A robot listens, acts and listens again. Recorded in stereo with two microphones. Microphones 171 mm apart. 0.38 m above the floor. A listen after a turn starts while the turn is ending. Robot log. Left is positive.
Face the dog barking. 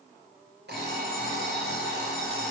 cmd idle
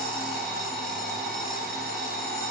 cmd idle
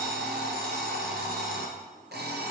end: I can't make out a dog barking, only an alarm clock.